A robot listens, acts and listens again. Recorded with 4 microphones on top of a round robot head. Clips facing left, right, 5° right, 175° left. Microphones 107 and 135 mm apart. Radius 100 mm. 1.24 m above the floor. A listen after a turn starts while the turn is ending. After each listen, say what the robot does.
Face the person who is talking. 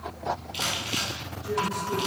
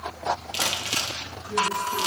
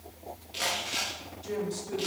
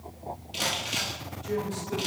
Keep listening.
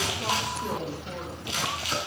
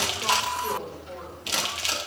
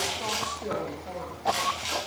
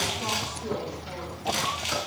Turn 30° left.
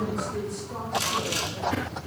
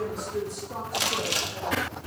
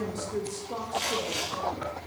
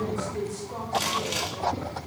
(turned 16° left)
Turn 20° right.
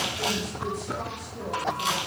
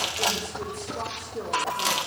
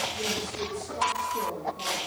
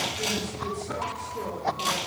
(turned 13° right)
Turn 50° right.
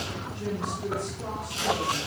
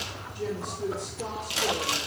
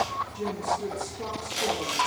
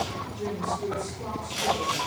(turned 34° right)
Turn 15° right.
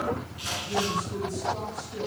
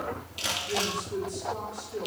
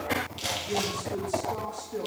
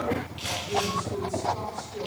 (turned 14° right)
Facing the woman speaking.